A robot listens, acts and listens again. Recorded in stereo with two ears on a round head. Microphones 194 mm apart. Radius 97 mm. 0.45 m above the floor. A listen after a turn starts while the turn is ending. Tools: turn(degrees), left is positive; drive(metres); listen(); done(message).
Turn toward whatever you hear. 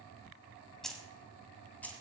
turn(degrees=30)
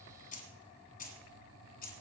turn(degrees=135)
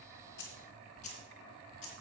turn(degrees=35)
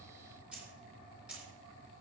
done("Found it: keys jangling, straight ahead, 2 to 4 m away.")